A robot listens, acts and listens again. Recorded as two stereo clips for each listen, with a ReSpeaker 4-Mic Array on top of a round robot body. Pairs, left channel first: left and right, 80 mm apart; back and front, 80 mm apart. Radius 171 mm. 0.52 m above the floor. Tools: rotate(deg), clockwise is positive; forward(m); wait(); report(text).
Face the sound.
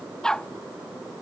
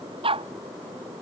report("Facing the dog barking.")